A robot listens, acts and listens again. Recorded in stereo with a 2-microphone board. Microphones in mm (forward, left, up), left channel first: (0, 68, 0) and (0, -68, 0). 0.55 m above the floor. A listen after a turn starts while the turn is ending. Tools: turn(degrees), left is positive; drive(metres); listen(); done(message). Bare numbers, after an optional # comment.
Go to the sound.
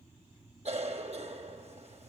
# The cough: about 50° right or 130° right.
turn(-50)
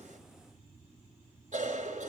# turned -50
# So it is at 75° right.
turn(-75)
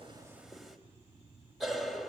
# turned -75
drive(1.0)
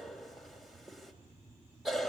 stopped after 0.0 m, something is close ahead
done("Something is in my way. I am facing the cough but have not reached it.")